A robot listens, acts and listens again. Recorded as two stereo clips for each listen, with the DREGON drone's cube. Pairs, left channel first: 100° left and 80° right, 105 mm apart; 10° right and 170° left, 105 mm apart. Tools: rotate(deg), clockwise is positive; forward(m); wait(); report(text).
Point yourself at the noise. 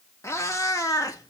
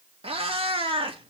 rotate(-155)
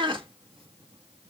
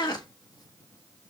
rotate(50)
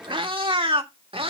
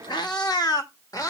rotate(65)
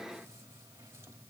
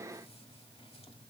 wait()
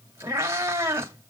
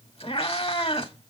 rotate(15)
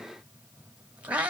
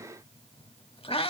report("Found it: a cat meowing, straight ahead.")